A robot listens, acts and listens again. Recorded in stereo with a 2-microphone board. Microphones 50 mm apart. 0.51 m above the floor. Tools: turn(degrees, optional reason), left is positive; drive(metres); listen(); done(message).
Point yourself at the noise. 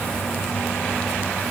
listen()
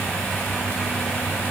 listen()
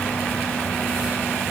done("I can't make out anything.")